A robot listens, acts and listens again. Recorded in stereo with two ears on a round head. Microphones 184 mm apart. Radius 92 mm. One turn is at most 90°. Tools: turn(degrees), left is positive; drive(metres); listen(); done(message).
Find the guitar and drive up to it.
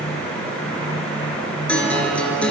turn(degrees=30)
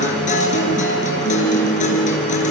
turn(degrees=90)
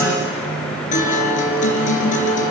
turn(degrees=35)
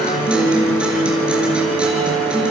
drive(metres=1.0)
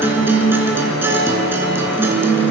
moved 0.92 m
turn(degrees=-10)
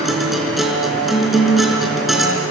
drive(metres=1.0)
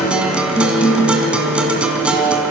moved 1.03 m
drive(metres=1.0)
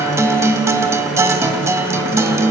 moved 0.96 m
turn(degrees=-15)
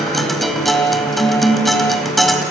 drive(metres=1.0)
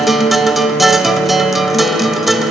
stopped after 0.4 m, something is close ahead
done("Arrived at the guitar, straight ahead.")